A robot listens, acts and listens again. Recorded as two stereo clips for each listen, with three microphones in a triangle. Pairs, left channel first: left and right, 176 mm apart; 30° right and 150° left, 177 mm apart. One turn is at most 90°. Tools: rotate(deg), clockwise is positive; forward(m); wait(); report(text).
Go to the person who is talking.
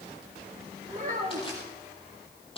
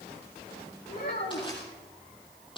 rotate(45)
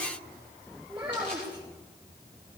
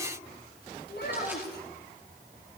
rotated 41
forward(1.0)
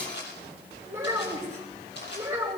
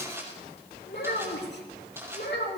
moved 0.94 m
rotate(15)
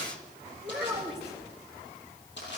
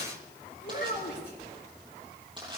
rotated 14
forward(1.0)
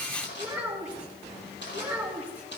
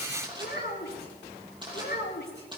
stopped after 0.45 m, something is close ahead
rotate(10)
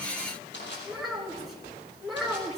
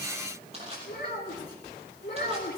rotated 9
report("Something is in my way. I am facing the child speaking but have not reached it.")